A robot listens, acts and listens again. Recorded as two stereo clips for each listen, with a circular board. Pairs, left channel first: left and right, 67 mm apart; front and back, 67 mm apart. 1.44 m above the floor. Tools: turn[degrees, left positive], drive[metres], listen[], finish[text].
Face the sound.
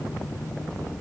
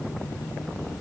Action: listen[]
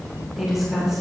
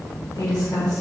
Action: finish[Facing the woman speaking.]